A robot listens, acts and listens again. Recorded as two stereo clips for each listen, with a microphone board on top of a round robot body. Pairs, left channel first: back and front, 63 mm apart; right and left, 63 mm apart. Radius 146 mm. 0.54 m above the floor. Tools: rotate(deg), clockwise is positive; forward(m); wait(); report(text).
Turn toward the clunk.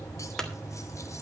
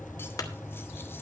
rotate(100)
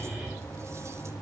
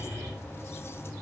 report("I heard a clunk from this way, but can't make it out now.")